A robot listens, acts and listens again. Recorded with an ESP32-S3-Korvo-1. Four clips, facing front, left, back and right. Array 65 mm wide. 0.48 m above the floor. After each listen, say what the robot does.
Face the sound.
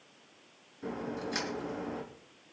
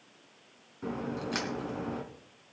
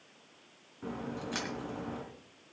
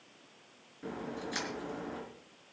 Turn 105° left.
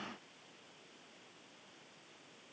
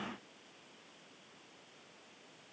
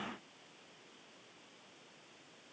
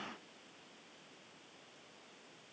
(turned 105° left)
I heard a crack from this way, but can't make it out now.